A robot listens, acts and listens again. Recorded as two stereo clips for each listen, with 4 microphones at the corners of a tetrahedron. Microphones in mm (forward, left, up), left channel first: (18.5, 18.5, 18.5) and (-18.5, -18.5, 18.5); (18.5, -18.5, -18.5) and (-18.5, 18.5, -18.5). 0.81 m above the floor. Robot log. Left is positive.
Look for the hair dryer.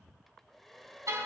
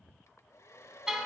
note: The hair dryer: 40° right.
cmd yaw -40
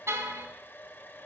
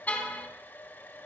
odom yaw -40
end: Facing the hair dryer, 1 to 2 m away.